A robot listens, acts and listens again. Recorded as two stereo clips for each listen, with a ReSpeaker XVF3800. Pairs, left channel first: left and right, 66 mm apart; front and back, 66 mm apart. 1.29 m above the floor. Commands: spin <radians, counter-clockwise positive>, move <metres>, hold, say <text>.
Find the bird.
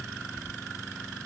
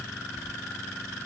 hold
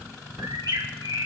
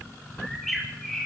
spin -1.57
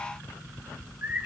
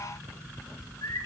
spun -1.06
spin -0.44
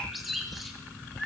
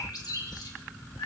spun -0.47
say Found it: a bird, straight ahead.